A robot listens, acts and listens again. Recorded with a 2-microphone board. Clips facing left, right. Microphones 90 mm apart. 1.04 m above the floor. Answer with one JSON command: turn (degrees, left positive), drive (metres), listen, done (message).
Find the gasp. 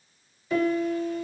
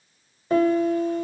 {"listen": true}
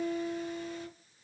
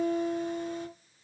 {"listen": true}
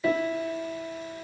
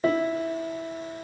{"done": "I can't make out a gasp to turn to."}